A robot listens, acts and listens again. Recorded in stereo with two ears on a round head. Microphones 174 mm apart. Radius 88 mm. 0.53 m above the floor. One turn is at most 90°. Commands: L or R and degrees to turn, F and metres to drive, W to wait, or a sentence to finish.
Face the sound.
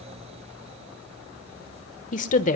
L40
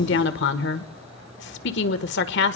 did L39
L90
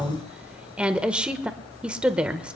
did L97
Facing the woman speaking, 1 to 2 m away.